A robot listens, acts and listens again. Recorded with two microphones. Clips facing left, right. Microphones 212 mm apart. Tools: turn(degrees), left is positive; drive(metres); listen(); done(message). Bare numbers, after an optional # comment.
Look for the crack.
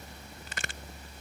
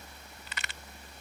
# The crack: about 50° left or 130° left.
turn(50)
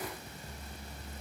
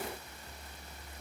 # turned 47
listen()
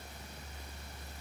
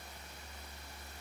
done("I heard a crack, but can't make it out now. It was about straight ahead or 85° left.")